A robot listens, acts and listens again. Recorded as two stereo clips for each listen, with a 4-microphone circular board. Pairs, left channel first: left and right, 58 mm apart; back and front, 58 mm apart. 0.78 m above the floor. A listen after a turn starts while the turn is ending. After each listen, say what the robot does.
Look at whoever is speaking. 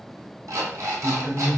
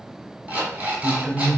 Turn 90° left.
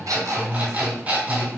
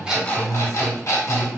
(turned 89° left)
Facing the man speaking, 1 to 2 m away.